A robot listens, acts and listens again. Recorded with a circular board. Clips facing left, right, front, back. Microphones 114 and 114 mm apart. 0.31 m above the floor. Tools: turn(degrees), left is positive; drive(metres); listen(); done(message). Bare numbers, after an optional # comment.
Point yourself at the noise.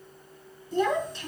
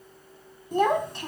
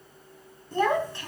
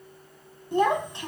# The child speaking: 115° right.
turn(-115)
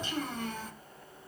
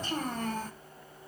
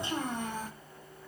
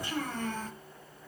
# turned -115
# The child speaking is now 70° right.
turn(-70)
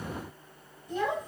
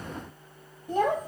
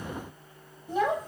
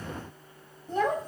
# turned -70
# The child speaking is now 85° right.
turn(-85)
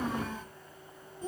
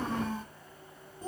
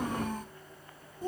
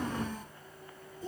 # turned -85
# The child speaking is now 15° right.
turn(-15)
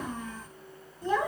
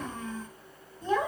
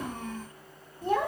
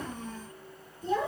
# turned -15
done("Facing the child speaking.")